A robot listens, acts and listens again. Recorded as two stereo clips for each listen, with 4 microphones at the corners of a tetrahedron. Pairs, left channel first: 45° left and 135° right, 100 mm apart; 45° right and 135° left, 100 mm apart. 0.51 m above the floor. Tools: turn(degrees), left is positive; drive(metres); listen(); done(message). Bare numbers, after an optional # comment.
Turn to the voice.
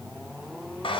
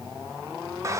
listen()
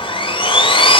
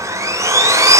listen()
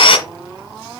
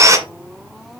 done("I can't make out anyone speaking to turn to.")